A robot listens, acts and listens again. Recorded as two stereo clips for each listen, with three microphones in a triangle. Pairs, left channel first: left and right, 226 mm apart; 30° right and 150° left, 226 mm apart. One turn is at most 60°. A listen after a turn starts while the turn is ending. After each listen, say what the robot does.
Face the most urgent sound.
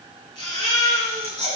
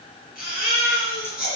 Turn 20° left.
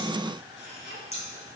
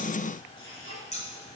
Keep listening.
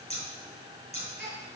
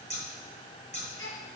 Found it: a baby crying, straight ahead, over 4 m away.